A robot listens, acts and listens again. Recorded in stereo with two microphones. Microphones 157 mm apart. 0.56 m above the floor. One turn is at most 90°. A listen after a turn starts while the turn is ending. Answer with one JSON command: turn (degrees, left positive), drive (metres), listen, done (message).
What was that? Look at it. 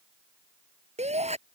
{"turn": -45}
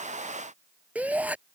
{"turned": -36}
{"turn": -10}
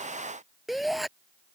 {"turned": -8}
{"done": "Found it: a shout, straight ahead."}